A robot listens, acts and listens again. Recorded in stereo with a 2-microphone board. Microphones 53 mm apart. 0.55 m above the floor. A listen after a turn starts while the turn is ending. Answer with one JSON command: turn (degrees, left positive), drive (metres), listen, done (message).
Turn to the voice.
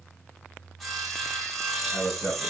{"turn": 90}
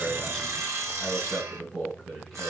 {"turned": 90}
{"done": "Found it: a man speaking, straight ahead."}